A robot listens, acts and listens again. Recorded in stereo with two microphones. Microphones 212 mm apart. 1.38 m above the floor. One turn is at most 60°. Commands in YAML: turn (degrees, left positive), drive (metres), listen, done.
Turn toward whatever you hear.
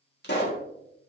turn: 55
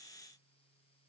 listen: true
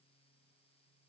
done: "I heard a pop, but can't make it out now. It was about straight ahead or 70° left."